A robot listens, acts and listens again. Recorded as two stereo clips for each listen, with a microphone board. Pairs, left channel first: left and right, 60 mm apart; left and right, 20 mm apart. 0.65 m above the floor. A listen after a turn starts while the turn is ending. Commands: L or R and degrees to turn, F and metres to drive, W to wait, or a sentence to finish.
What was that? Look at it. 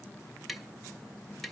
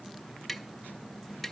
L30
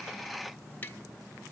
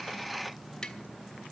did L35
W
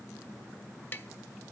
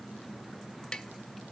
L145
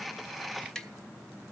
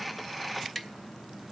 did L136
L10
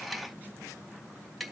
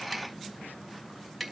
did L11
Facing the tapping, 1 to 2 m away.